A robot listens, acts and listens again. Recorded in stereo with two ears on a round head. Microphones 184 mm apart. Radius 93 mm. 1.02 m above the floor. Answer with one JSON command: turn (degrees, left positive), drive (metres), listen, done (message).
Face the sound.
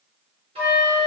{"turn": -30}
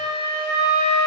{"turn": -125}
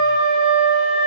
{"turn": 15}
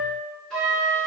{"done": "Facing the flute."}